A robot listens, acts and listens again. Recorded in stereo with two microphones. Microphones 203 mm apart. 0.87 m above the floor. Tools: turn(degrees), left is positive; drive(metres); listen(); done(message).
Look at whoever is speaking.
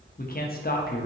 turn(degrees=45)
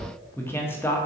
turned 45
turn(degrees=10)
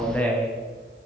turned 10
done("Found it: a man speaking, straight ahead.")